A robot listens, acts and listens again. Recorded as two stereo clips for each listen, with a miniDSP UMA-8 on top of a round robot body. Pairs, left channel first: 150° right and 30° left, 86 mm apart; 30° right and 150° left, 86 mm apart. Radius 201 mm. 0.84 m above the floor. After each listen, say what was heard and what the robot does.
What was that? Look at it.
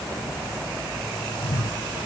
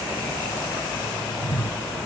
The whoosh: 100° right. Turn 100° right.
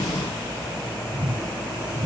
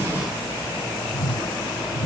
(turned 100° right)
Facing the whoosh.